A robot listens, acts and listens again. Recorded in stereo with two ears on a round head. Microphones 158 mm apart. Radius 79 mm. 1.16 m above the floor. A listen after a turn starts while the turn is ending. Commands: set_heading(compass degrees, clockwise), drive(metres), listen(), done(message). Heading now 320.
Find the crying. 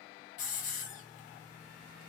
listen()
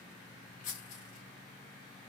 listen()
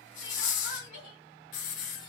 set_heading(255)
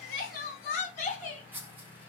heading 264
set_heading(214)
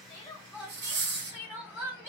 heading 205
set_heading(215)
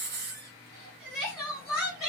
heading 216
done("Found it: crying, straight ahead, 1 to 2 m away.")